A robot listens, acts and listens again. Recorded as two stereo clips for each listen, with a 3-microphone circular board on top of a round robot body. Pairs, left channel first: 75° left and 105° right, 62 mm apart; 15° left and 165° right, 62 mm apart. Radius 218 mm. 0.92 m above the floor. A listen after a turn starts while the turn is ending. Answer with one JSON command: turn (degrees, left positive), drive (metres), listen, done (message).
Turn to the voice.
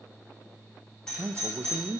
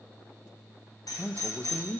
{"turn": -55}
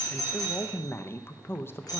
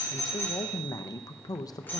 {"turn": 25}
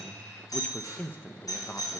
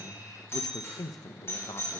{"turn": 15}
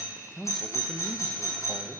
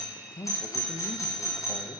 {"turn": -10}
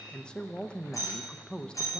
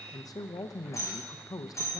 {"done": "Found it: a man speaking, straight ahead."}